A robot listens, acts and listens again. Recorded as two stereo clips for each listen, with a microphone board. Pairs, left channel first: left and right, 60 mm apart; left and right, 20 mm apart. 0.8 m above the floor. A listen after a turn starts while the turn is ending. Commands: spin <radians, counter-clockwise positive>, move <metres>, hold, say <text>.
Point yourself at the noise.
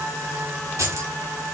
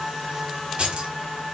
spin -1.13
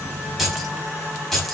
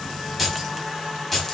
say Found it: keys jangling, straight ahead, over 4 m away.